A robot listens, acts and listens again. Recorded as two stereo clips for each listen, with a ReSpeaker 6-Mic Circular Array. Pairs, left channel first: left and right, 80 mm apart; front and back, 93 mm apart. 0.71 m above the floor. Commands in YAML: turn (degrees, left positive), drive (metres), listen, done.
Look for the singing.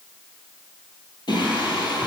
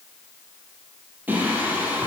turn: 110
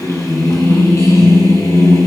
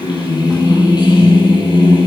turn: 35
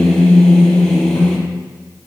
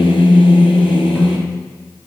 turn: 10
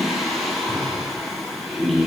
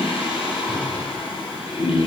done: "Found it: singing, straight ahead, 2 to 4 m away."